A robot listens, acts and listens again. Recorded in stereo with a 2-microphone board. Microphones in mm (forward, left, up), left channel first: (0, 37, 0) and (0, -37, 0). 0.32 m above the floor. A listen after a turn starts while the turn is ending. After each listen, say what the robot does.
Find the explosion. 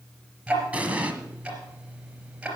Turn 20° right.
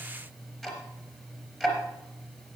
Keep listening.
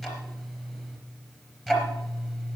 I heard an explosion, but can't make it out now. It was about straight ahead or 140° right.